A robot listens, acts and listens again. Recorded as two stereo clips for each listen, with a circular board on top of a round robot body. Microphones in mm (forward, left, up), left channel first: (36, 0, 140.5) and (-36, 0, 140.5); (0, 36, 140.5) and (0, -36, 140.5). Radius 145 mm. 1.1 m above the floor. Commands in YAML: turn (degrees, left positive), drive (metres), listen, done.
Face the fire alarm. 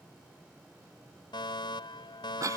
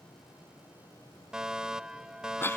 turn: -10
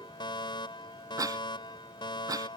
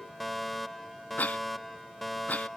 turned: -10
done: "Found it: a fire alarm, straight ahead."